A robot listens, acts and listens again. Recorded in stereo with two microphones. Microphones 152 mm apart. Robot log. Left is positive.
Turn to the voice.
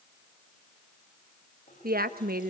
cmd yaw -90
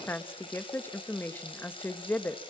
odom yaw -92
note: So it is at 15° left.
cmd yaw +15
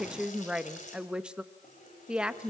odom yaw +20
end: Found it: a woman speaking, straight ahead, 1 to 2 m away.